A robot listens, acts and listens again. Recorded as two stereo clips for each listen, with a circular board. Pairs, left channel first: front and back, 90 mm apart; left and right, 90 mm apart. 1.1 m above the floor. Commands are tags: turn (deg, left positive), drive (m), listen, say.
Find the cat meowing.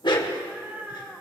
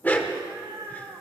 <turn deg="-105"/>
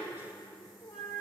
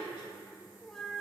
<turn deg="10"/>
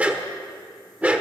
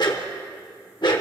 <listen/>
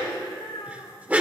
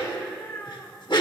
<turn deg="20"/>
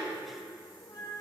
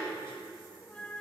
<turn deg="20"/>
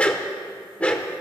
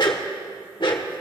<listen/>
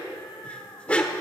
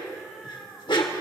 <say>Facing the cat meowing.</say>